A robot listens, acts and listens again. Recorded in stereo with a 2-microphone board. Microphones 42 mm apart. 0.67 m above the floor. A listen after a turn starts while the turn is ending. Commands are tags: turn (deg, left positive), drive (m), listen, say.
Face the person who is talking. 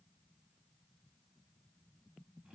<listen/>
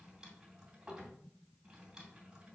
<listen/>
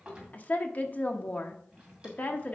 <turn deg="40"/>
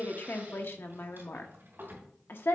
<turn deg="90"/>
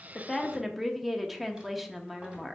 <say>Found it: a woman speaking, straight ahead, under 1 m away.</say>